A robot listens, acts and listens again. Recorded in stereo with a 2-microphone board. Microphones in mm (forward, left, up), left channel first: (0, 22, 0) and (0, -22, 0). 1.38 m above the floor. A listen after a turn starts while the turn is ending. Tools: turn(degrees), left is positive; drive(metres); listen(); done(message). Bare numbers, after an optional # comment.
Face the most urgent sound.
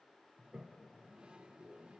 listen()
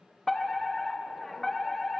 turn(30)
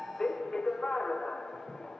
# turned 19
# So it is at 160° left.
turn(160)
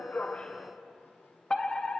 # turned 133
# The fire alarm is now 25° left.
turn(25)
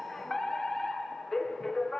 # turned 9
# The fire alarm is now 15° left.
turn(15)
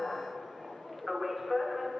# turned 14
done("Facing the fire alarm, 1 to 2 m away.")